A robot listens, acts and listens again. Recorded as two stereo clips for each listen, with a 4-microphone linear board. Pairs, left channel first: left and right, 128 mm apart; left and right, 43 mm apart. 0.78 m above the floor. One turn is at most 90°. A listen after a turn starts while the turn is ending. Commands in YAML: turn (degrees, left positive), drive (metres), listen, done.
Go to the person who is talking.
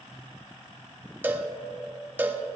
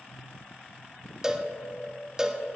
listen: true
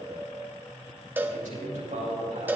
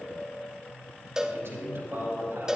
turn: -90
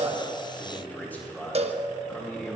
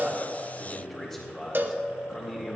turn: 15
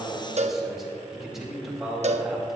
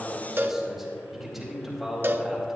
drive: 1.0
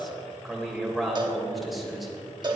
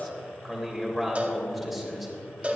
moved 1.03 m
drive: 1.0
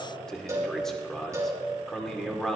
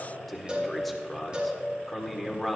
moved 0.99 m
drive: 1.0
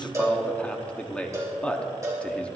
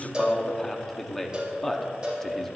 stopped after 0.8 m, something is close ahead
turn: 10
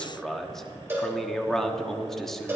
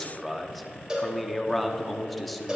done: "I am next to the man speaking."